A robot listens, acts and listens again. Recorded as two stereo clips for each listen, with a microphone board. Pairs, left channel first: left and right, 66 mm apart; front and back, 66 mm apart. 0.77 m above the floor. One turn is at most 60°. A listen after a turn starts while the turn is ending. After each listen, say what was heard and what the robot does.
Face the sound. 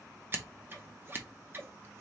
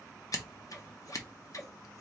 The scissors: 35° right. Turn 35° right.
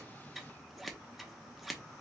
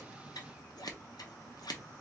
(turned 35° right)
Found it: scissors, straight ahead.